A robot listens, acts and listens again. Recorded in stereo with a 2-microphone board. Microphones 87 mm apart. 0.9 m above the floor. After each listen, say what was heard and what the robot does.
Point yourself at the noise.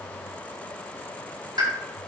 The pop: about 60° right or 120° right. Turn 60° right.
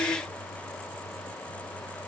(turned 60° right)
Keep listening.
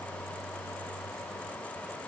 I heard a pop, but can't make it out now. It was about straight ahead or 60° right.